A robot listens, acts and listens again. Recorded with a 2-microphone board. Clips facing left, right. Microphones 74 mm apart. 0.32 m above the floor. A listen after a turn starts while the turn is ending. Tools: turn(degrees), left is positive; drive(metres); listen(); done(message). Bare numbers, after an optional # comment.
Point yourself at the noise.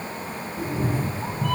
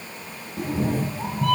turn(-90)
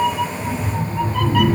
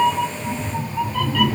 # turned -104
# So it is at 10° left.
turn(10)
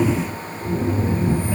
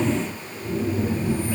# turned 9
# The cat meowing is now 15° left.
turn(15)
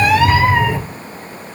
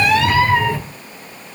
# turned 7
# The cat meowing is now 10° left.
turn(10)
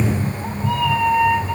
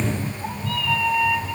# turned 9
# The cat meowing is now 15° left.
turn(15)
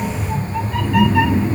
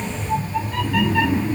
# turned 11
done("Found it: a cat meowing, straight ahead, 2 to 4 m away.")